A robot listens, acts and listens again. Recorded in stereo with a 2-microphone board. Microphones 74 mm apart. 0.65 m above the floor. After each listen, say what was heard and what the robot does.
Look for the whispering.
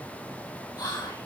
Turn 90° left.
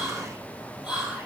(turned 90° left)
So it is at 10° right. Turn 10° right.
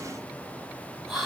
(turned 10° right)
Found it: whispering, straight ahead.